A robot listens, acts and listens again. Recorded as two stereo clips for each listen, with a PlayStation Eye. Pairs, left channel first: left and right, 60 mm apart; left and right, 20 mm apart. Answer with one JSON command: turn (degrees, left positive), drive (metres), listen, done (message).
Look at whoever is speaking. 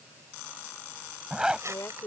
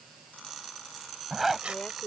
{"turn": 65}
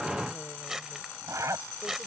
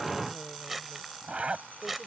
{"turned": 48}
{"listen": true}
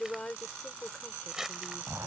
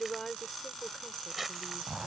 {"turn": 15}
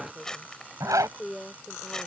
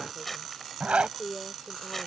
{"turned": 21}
{"done": "Facing the woman speaking."}